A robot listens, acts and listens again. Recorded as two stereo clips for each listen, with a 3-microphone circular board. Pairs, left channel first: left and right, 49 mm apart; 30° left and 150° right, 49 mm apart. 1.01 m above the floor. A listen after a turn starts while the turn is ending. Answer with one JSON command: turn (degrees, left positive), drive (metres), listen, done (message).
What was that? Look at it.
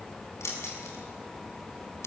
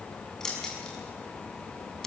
{"turn": 110}
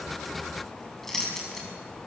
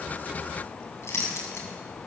{"done": "Found it: keys jangling, straight ahead, over 4 m away."}